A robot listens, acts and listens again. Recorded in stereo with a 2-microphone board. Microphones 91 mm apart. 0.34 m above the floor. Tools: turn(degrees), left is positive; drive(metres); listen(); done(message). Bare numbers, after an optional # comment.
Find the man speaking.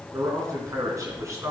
# The man speaking: about 35° right or 145° right.
turn(-35)
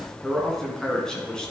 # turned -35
# So it is at 10° left.
turn(10)
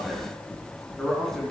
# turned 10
done("Found it: a man speaking, straight ahead.")